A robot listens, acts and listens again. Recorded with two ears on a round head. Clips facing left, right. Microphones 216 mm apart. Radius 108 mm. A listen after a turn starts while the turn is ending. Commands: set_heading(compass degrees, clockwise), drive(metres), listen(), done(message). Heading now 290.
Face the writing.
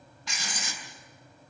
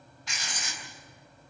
set_heading(220)
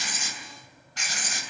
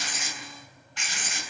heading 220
set_heading(185)
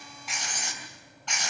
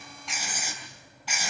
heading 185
done("Found it: writing, straight ahead, 2 to 4 m away.")